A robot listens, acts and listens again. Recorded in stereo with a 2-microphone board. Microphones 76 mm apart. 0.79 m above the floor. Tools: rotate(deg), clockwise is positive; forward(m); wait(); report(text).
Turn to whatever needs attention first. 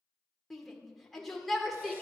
rotate(-30)
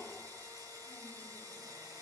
wait()
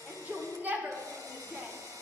rotate(25)
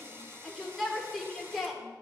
report("Facing the shout, 1 to 2 m away.")